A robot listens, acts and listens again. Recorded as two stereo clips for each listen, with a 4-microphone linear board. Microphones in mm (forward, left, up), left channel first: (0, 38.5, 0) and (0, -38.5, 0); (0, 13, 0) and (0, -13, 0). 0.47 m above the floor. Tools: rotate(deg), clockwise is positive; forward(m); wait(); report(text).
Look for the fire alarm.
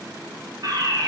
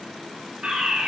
rotate(55)
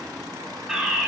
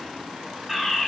report("Facing the fire alarm, over 4 m away.")